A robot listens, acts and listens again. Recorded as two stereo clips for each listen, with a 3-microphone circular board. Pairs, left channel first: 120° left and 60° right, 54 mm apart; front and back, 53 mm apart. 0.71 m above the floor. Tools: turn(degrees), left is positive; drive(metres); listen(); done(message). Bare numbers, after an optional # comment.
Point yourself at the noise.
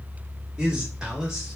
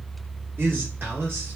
# The man speaking: 135° right.
turn(-135)
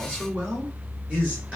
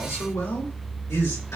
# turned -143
done("Facing the man speaking, 2 to 4 m away.")